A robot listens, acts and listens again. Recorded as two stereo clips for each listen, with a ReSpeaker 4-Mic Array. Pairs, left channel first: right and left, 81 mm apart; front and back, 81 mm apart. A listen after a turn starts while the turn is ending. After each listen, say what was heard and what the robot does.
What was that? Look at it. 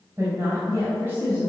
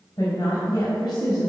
The woman speaking: 30° left. Turn 30° left.
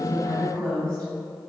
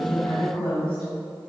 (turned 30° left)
The woman speaking is now 10° right. Turn 10° right.
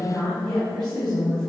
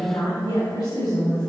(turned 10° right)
Found it: a woman speaking, straight ahead.